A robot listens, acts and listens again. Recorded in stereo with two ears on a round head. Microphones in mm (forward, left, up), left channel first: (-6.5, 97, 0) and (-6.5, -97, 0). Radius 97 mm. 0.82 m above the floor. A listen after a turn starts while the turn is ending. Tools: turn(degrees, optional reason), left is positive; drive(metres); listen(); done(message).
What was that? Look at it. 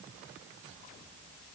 listen()
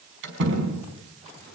turn(degrees=-55, reason="The door slam: about 55° right or 125° right.")
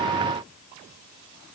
listen()
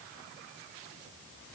done("I heard a door slam, but can't make it out now. It was about straight ahead or 70° right.")